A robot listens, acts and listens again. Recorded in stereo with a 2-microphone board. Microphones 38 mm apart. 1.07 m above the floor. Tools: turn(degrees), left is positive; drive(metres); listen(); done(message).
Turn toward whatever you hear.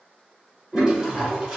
turn(degrees=-25)
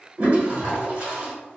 turn(degrees=-125)
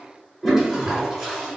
done("Facing the toilet flushing.")